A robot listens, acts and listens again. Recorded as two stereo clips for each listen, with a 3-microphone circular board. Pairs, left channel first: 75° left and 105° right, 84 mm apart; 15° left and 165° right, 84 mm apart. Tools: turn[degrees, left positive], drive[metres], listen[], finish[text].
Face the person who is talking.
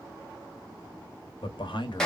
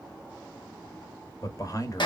Thought: The man speaking: 60° left.
Action: turn[60]
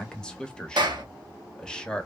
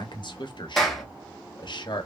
Action: finish[Facing the man speaking, under 1 m away.]